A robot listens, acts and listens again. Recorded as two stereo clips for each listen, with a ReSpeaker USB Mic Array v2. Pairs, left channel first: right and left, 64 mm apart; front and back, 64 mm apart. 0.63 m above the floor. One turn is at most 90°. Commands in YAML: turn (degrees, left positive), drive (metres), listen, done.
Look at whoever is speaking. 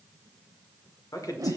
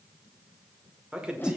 turn: -90
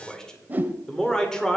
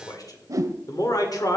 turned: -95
turn: -10
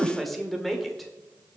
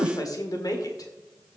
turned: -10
done: "Found it: a man speaking, straight ahead, 1 to 2 m away."